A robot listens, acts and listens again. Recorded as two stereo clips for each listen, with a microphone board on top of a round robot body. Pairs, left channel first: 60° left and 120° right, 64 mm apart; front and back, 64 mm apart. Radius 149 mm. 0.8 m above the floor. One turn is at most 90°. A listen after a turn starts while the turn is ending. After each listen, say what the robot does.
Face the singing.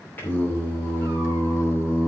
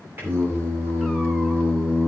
Turn 90° left.
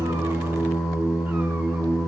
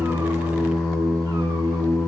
Turn 30° left.
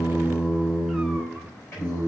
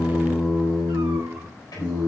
Turn 10° left.
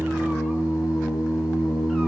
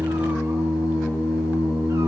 Found it: singing, straight ahead.